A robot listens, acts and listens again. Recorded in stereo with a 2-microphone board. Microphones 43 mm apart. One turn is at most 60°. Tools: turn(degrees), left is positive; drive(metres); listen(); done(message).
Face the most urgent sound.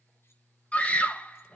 turn(degrees=30)
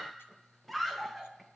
done("Facing the scream.")